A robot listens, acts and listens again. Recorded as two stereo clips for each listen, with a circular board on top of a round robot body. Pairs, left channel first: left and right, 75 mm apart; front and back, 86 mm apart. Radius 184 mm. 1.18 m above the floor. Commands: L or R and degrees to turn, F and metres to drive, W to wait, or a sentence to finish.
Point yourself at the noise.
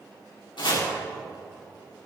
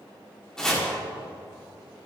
L85
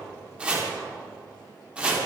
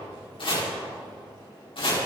R15
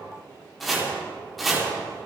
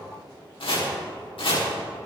Found it: chopping, straight ahead.